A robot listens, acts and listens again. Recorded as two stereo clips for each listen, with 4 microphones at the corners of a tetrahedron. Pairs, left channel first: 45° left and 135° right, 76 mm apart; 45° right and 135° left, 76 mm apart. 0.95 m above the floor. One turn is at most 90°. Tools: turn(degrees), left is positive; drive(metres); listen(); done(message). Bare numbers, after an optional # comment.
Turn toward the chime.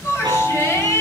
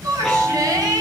# The chime: 130° right.
turn(-90)
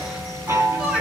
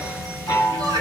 # The chime is now 80° right.
turn(-80)
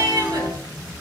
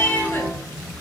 # The chime is now 25° left.
turn(25)
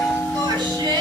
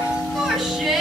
done("Found it: a chime, straight ahead, over 4 m away.")